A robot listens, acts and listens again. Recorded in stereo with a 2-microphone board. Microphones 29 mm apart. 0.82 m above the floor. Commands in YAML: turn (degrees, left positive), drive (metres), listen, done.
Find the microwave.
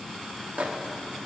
turn: -60
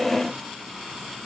listen: true
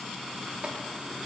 listen: true
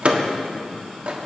turn: -50
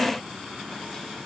listen: true
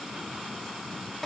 listen: true
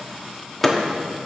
turn: 10
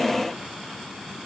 listen: true
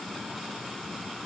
listen: true
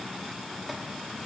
done: "I heard a microwave from this way, but can't make it out now."